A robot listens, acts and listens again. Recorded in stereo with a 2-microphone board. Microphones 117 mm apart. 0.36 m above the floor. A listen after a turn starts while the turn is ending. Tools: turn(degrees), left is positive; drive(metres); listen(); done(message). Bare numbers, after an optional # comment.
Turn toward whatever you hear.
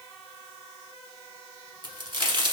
# The crack: about 45° right or 135° right.
turn(-45)
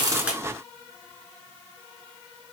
listen()
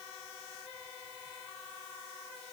done("I heard a crack, but can't make it out now. It was about straight ahead or 90° right.")